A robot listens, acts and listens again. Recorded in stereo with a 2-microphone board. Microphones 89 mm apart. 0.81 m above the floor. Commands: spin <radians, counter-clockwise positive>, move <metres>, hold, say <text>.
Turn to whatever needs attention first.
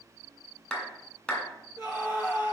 spin 0.79
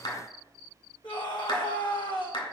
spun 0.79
spin 1.48
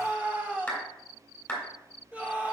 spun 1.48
spin -0.26
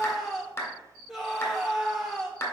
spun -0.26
say Facing the scream.